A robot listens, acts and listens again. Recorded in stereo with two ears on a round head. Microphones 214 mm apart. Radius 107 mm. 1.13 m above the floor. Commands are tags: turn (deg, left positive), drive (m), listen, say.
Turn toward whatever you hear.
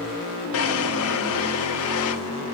<turn deg="65"/>
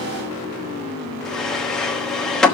<say>Facing the drawer, 1 to 2 m away.</say>